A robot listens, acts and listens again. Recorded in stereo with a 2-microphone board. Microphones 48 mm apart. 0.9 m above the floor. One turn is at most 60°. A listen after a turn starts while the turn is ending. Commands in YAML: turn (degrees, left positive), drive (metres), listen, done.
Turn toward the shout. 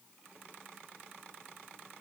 listen: true
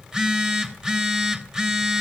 listen: true
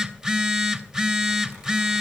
done: "I can't make out a shout, only a phone buzzing."